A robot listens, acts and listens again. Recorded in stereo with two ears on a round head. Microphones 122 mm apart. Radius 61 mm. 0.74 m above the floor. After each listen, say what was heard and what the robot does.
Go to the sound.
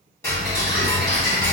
The ticking: about 20° left or 160° left. Turn 20° left.
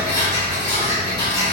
So it is at 140° left. Turn 140° left.
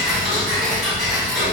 Drive 1.0 m forward.
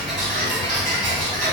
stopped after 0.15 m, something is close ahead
Blocked. The ticking is further on, straight ahead.